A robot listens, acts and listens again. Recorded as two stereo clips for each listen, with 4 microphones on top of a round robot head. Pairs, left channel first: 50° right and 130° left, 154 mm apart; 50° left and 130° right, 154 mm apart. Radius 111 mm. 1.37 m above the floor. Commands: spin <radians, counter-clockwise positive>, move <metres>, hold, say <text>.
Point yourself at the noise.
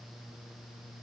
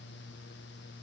hold
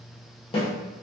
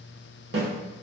spin -1.92
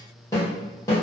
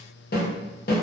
spin 0.35
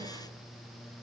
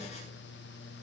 hold
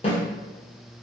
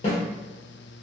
say Found it: a snare drum, straight ahead, under 1 m away.